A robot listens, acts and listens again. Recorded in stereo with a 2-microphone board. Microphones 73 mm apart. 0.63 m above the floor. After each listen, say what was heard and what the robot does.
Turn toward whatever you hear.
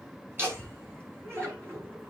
The laughter: about 35° right or 145° right. Turn 35° right.
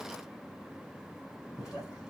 So it is at 10° right. Turn 10° right.
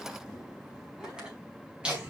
The laughter is now 15° right. Turn 15° right.
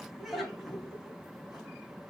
Facing the laughter.